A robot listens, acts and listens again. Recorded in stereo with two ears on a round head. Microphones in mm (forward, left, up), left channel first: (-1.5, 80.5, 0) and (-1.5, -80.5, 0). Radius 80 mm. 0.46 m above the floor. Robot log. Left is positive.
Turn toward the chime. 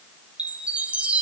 cmd yaw -30
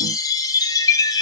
note: So it is at 20° left.
cmd yaw +20
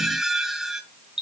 end: Found it: a chime, straight ahead.